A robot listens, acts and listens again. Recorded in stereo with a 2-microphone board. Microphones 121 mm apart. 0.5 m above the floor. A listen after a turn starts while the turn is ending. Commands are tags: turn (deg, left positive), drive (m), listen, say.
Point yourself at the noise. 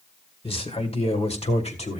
<turn deg="65"/>
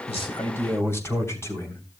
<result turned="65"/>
<turn deg="25"/>
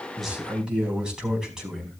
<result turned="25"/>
<say>Facing the man speaking.</say>